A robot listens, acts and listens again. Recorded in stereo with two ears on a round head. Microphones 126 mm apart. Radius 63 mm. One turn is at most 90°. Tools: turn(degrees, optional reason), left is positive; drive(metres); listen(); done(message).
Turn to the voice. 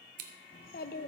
turn(degrees=70, reason="The child speaking: about 70° left or 110° left.")
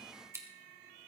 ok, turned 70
listen()
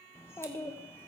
turn(degrees=20, reason="So it is at 20° left.")
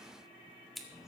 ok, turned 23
done("Facing the child speaking.")